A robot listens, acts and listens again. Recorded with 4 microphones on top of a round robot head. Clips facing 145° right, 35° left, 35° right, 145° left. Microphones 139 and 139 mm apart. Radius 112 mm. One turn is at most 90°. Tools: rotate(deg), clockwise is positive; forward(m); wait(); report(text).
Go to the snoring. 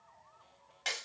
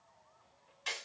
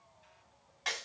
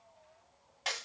wait()
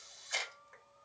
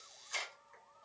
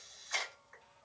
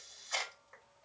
wait()
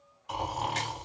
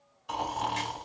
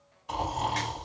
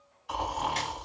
rotate(-10)
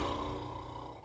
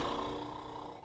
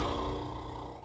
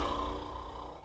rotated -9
forward(1.0)
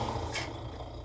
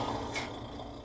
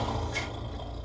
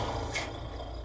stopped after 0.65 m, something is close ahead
report("Arrived at the snoring, straight ahead.")